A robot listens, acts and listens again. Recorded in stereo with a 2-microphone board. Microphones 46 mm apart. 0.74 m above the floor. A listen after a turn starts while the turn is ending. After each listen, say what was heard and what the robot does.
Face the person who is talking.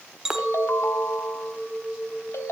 Keep listening.
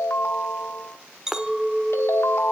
Keep listening.
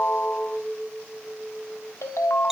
I can't make out anyone speaking, only a clink and a ringtone.